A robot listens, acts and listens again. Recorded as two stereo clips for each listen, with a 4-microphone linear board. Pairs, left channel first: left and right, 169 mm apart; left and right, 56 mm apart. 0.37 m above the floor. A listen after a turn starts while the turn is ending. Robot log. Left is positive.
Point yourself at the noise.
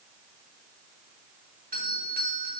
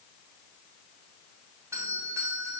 note: The doorbell: about 60° right or 120° right.
cmd yaw -60
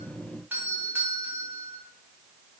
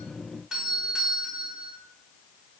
note: So it is at 15° right.
cmd yaw -15
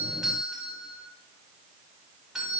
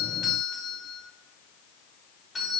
end: Facing the doorbell, 2 to 4 m away.